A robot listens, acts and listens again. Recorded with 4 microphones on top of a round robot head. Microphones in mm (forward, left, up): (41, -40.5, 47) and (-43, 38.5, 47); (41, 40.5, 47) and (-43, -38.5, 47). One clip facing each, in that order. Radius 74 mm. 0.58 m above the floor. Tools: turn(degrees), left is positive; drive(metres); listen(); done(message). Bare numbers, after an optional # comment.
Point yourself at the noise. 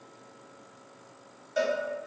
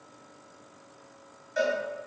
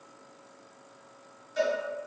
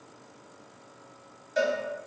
# The cowbell: 110° right.
turn(-110)
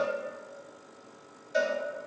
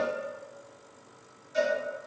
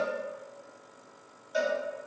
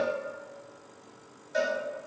# The cowbell is now 35° right.
turn(-35)
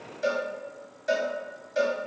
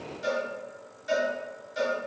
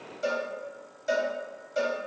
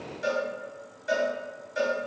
# The cowbell is now 10° right.
turn(-10)
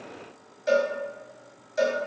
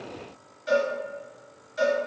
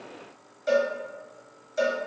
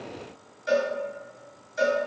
done("Found it: a cowbell, straight ahead, under 1 m away.")